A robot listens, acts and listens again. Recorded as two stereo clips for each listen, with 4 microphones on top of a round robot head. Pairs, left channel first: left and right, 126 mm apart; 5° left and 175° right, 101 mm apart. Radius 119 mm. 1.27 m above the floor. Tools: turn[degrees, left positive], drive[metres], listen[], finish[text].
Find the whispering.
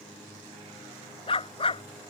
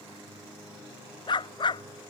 Action: listen[]
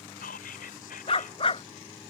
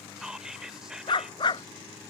Thought: The whispering: 100° left.
Action: turn[100]
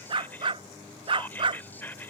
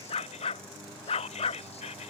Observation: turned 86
Thought: The whispering is now 15° left.
Action: turn[15]
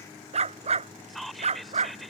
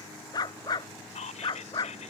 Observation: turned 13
Action: finish[Found it: whispering, straight ahead.]